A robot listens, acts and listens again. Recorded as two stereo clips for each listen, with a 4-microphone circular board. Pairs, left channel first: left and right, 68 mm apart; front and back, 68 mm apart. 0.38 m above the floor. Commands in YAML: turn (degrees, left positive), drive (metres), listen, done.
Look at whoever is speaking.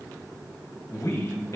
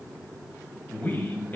turn: 60
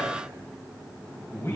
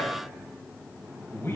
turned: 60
turn: 50
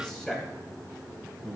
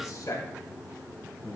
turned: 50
done: "Found it: a man speaking, straight ahead, 1 to 2 m away."